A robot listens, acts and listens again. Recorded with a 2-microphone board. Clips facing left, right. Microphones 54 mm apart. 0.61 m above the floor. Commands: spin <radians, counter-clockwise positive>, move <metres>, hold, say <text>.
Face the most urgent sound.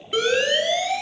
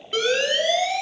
spin 0.52
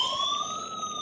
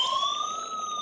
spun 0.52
spin -0.44
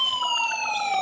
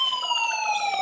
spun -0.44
say Found it: a siren, straight ahead.